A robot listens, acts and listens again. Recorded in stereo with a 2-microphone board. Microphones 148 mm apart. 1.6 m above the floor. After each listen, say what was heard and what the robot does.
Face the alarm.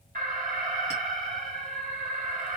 The alarm: about 70° right or 110° right. Turn 70° right.
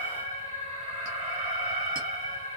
So it is at 40° right. Turn 40° right.
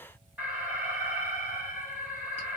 The alarm is now 10° right. Turn 10° right.
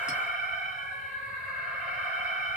Found it: an alarm, straight ahead, 1 to 2 m away.